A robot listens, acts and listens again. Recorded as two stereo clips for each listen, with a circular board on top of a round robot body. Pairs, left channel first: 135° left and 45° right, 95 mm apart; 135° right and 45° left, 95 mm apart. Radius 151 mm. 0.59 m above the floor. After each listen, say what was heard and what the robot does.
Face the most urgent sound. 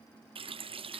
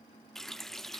Keep listening.
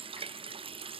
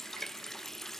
Keep listening.
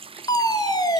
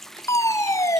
The fire alarm: 175° left. Turn 175° left.
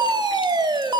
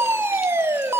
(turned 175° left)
The fire alarm is now 15° right. Turn 15° right.
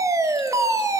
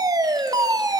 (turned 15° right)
Facing the fire alarm.